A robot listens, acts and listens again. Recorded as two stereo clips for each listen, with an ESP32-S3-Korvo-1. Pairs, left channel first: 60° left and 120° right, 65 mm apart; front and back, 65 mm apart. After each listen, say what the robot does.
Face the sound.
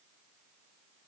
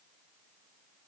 Keep listening.
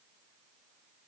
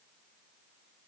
Keep listening.
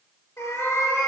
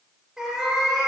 Turn 100° left.
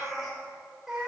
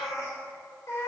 Turn 35° right.
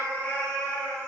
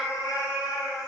Facing the cat meowing.